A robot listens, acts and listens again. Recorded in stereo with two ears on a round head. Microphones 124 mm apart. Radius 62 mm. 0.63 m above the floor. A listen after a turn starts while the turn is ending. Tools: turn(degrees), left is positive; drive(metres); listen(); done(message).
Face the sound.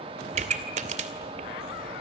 turn(degrees=-55)
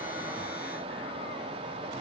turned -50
listen()
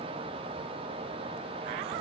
done("I heard a pop, but can't make it out now. It was about 5° right or 75° right.")